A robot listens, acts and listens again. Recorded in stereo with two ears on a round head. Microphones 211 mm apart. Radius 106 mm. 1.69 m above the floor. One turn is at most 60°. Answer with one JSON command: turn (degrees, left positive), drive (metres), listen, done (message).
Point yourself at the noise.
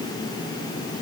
{"listen": true}
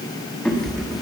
{"turn": 30}
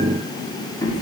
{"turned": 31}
{"turn": 60}
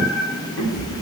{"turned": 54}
{"turn": 60}
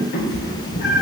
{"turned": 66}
{"turn": 55}
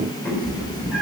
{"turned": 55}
{"done": "Facing the cat meowing, 2 to 4 m away."}